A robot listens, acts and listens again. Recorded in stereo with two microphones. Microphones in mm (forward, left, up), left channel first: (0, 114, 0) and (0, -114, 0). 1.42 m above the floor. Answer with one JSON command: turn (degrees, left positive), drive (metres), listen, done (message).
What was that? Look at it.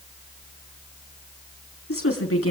{"turn": 90}
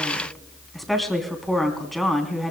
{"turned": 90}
{"done": "Facing the woman speaking, 2 to 4 m away."}